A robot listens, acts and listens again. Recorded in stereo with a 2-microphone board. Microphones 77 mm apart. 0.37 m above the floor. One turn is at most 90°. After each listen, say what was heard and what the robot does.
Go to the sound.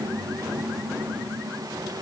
Keep listening.
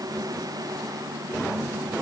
Keep listening.
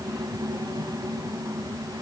I can't make out anything to turn to.